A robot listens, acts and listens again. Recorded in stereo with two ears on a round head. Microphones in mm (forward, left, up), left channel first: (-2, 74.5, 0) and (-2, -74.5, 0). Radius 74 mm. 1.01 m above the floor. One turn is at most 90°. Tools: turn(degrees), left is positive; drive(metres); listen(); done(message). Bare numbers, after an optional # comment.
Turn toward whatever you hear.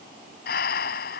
# The breathing: about 60° left or 120° left.
turn(60)
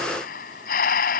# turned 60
# So it is at 55° left.
turn(55)
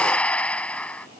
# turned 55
# The breathing is now 10° left.
turn(10)
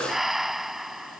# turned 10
done("Found it: breathing, straight ahead.")